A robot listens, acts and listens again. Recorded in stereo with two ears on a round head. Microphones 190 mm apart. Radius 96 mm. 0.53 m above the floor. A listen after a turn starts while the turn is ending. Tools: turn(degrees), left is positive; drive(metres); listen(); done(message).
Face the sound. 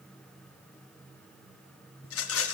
turn(degrees=70)
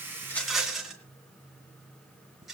done("Found it: a rattle, straight ahead.")